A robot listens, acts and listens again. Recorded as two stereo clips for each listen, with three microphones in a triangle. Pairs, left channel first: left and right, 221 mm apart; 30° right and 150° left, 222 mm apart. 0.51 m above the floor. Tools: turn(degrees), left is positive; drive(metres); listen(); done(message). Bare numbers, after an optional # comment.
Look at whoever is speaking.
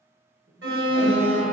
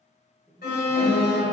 # The man speaking: 130° right.
turn(-130)
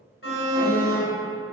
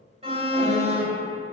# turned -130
listen()
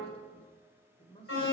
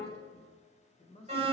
# The man speaking is now 30° left.
turn(30)
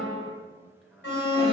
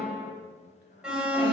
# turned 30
done("Found it: a man speaking, straight ahead.")